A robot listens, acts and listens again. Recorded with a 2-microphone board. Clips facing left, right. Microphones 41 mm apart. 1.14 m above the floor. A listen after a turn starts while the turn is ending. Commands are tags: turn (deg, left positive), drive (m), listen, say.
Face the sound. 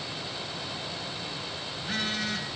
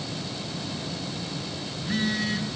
<turn deg="60"/>
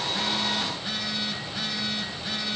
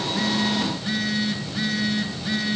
<say>Found it: a phone buzzing, straight ahead, over 4 m away.</say>